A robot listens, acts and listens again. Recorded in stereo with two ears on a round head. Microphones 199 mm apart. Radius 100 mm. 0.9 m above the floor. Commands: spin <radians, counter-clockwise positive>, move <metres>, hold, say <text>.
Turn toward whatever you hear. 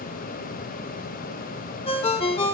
spin 0.44
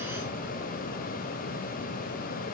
hold
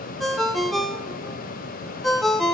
say Found it: a ringtone, straight ahead, 1 to 2 m away.